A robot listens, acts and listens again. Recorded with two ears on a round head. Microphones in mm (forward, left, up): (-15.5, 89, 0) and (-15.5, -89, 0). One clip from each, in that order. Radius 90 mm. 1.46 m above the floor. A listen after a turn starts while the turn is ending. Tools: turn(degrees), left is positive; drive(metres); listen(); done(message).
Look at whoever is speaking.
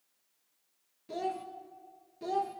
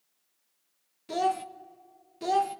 turn(degrees=-50)
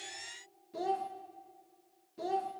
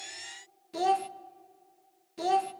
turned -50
turn(degrees=-75)
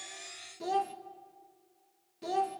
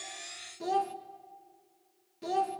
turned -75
done("Found it: a child speaking, straight ahead, under 1 m away.")